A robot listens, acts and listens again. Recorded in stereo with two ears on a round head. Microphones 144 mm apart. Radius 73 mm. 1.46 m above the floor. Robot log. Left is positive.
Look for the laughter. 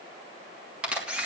cmd idle
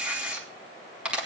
cmd idle
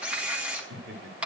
note: The laughter: about 70° right or 110° right.
cmd yaw -70
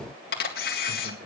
cmd idle
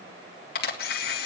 cmd idle
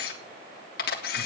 end: I heard laughter, but can't make it out now. It was about straight ahead or 40° right.